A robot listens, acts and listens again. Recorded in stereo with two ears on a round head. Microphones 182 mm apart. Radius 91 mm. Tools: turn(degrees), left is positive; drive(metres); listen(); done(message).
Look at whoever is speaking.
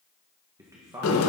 turn(degrees=-30)
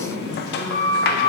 listen()
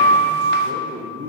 turn(degrees=-135)
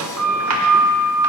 listen()
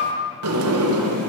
listen()
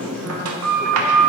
done("I heard a man speaking from this way, but can't make it out now.")